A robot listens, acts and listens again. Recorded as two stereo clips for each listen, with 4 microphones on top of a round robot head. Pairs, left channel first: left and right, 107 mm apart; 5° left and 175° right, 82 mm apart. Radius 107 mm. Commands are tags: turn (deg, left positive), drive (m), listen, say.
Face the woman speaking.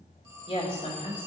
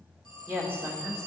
<turn deg="130"/>
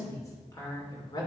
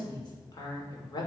<turn deg="40"/>
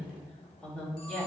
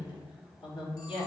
<turn deg="15"/>
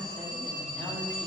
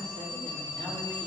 <listen/>
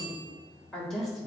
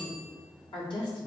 <say>Facing the woman speaking.</say>